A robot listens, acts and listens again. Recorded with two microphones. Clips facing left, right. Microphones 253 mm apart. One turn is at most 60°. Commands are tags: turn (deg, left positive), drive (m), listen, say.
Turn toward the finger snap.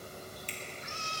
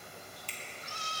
<turn deg="20"/>
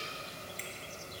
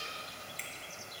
<listen/>
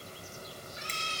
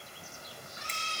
<listen/>
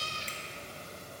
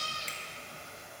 <say>I heard a finger snap, but can't make it out now. It was about straight ahead or 140° left.</say>